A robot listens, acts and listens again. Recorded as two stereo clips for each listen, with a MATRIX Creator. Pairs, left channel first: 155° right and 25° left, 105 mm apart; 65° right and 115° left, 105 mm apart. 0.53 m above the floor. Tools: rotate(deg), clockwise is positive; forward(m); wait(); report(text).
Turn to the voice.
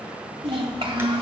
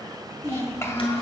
report("Facing the child speaking.")